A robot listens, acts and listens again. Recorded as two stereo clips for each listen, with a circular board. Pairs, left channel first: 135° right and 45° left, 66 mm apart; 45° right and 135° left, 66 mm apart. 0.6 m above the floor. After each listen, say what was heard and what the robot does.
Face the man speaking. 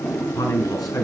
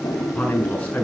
The man speaking: 115° right. Turn 115° right.
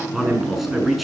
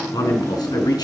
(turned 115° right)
The man speaking is now 45° right. Turn 45° right.
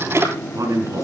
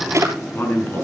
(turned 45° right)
The man speaking is now 10° left. Turn 10° left.
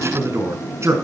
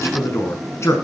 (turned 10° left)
Found it: a man speaking, straight ahead.